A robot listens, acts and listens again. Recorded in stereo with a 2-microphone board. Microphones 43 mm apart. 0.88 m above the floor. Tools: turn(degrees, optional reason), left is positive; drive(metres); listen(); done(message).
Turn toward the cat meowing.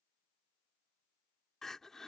listen()
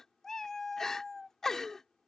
turn(degrees=30)
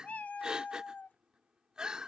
turn(degrees=140, reason="So it is at 140° left.")
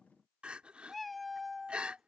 done("Facing the cat meowing.")